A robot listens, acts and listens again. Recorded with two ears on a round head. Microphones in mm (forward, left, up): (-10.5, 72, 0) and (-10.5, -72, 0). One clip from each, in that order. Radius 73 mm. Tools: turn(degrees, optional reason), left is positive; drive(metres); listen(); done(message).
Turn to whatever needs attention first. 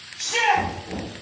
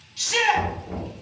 turn(degrees=-70, reason="The shout: about 70° right or 110° right.")
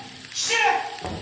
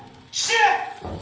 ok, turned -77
turn(degrees=-35, reason="So it is at 35° right.")
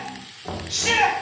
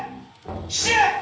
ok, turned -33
done("Facing the shout.")